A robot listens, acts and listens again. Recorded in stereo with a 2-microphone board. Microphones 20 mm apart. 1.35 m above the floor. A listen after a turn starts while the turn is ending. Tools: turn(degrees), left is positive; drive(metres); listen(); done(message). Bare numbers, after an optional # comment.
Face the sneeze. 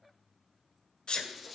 # The sneeze: about 40° left or 140° left.
turn(40)
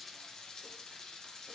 listen()
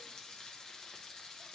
done("I heard a sneeze, but can't make it out now. It was about straight ahead or 100° left.")